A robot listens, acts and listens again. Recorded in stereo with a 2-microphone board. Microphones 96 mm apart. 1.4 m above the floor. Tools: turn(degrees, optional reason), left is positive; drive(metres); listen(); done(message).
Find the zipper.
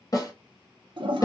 listen()
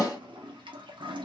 listen()
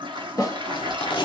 turn(degrees=55, reason="The zipper: about 55° left or 125° left.")
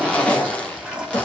turn(degrees=15, reason="So it is at 15° left.")
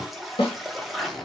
done("Found it: a zipper, straight ahead.")